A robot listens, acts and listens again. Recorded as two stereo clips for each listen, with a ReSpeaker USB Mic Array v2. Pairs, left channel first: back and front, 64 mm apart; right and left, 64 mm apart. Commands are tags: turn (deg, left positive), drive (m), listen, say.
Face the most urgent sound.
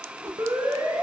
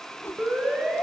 <turn deg="20"/>
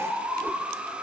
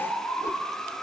<say>Facing the siren, over 4 m away.</say>